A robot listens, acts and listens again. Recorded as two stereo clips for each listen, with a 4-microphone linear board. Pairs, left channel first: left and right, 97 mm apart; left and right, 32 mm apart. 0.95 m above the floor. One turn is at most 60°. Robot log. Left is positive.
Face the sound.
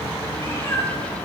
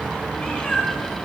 note: The cat meowing: about 30° left or 150° left.
cmd yaw +30
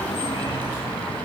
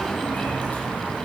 cmd idle
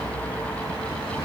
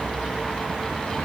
cmd idle
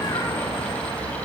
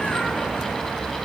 end: I heard a cat meowing, but can't make it out now. It was about straight ahead or 120° left.